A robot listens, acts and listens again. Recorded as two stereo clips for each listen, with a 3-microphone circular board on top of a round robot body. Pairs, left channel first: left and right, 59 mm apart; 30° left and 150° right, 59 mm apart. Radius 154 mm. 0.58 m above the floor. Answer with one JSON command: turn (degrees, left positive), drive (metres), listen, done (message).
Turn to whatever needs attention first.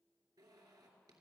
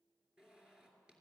{"listen": true}
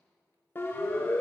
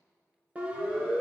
{"turn": 145}
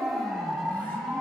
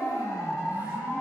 {"done": "Facing the siren."}